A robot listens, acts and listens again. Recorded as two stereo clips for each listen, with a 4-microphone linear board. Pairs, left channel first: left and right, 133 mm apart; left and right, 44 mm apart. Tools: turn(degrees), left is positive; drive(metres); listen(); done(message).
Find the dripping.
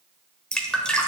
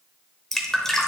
turn(degrees=30)
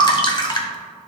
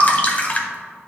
turn(degrees=145)
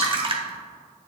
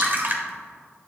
turn(degrees=-45)
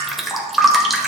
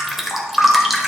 done("Found it: dripping, straight ahead.")